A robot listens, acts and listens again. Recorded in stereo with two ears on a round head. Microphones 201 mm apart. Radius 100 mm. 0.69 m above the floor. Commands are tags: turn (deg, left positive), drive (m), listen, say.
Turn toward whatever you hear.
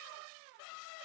<listen/>
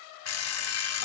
<turn deg="70"/>
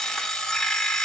<say>Found it: an alarm clock, straight ahead.</say>